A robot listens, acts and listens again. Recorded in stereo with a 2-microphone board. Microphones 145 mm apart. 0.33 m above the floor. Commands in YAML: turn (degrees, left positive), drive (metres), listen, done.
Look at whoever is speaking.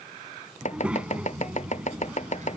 turn: -30
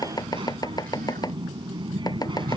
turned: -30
turn: -140
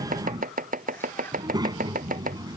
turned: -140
turn: -30
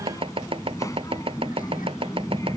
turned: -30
turn: 25
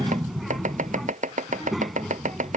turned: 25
done: "Facing the child speaking."